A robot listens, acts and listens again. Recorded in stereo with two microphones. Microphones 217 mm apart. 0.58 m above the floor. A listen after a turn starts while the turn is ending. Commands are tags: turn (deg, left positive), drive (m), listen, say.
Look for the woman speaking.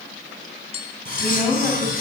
<turn deg="-30"/>
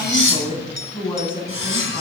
<turn deg="25"/>
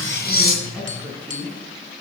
<say>Found it: a woman speaking, straight ahead, over 4 m away.</say>